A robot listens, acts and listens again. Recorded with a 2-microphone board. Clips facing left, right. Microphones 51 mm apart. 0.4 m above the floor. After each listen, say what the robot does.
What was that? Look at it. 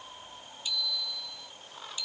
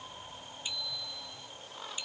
Turn 30° right.
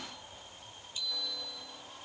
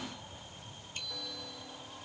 Turn 125° right.
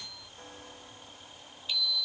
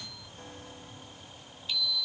Found it: a bicycle bell, straight ahead.